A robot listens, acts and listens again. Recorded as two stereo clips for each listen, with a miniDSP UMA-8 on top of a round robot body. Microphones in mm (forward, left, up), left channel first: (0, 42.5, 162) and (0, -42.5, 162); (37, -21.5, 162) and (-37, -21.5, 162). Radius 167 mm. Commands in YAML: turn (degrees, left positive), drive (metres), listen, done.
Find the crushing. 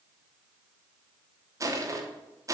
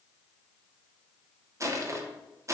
turn: -135
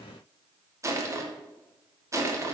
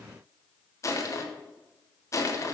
turn: -40
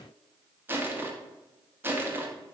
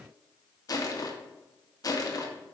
turn: -30
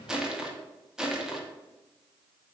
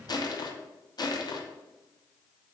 turn: -10
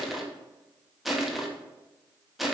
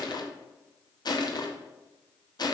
done: "Facing the crushing."